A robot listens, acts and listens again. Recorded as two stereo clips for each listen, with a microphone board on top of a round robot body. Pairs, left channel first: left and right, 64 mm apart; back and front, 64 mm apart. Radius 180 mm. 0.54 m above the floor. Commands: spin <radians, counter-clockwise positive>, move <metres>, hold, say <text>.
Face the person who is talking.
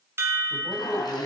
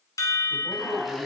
spin 2.71
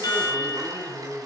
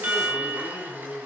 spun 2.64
say Found it: a man speaking, straight ahead.